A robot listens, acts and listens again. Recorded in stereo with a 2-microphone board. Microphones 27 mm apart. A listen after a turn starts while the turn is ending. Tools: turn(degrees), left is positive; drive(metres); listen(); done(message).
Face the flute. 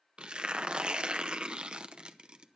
listen()
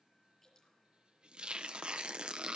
listen()
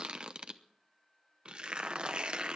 done("I can't make out a flute, only tearing paper and dripping.")